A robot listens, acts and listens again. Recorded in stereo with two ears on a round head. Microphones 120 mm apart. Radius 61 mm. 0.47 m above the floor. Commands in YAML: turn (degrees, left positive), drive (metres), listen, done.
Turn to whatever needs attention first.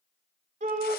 turn: -65
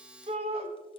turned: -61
turn: -50
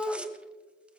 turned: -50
done: "Facing the shout."